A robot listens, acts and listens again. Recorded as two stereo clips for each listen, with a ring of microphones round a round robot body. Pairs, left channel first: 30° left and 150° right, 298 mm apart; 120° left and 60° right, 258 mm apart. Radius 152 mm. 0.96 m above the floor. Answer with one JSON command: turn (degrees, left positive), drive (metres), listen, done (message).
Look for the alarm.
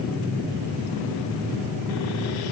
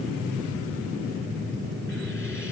{"listen": true}
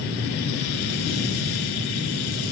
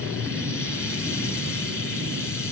{"listen": true}
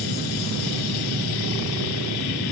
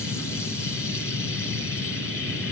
{"done": "I can't make out an alarm."}